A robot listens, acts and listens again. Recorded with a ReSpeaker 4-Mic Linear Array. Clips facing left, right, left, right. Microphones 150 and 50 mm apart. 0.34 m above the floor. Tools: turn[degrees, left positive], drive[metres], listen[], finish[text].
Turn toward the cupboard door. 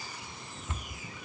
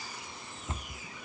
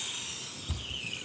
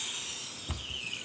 Thought: The cupboard door: about 30° right or 150° right.
Action: turn[-30]
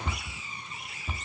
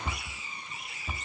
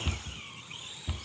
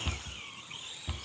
Action: finish[Found it: a cupboard door, straight ahead.]